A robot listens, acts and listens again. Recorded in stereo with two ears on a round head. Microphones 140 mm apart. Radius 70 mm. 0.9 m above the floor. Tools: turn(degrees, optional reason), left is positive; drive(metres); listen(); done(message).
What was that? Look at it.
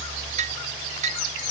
turn(degrees=-50, reason="The dishes clattering: about 50° right or 130° right.")
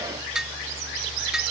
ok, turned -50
done("Facing the dishes clattering.")